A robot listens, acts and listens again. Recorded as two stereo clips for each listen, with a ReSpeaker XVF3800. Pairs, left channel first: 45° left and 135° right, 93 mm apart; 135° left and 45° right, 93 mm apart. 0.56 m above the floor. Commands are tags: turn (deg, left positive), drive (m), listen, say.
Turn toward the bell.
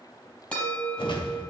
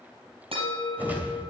<turn deg="-30"/>
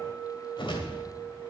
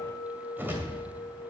<turn deg="-35"/>
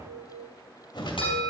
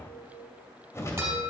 <turn deg="20"/>
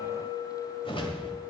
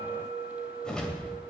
<say>Facing the bell.</say>